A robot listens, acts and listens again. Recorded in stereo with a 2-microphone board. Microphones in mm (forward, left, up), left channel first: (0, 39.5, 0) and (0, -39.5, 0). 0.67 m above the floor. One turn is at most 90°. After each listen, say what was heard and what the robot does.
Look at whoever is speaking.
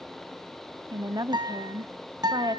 The woman speaking: about 55° right or 125° right. Turn 55° right.
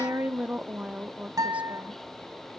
So it is at 20° right. Turn 20° right.
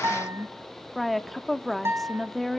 Found it: a woman speaking, straight ahead, under 1 m away.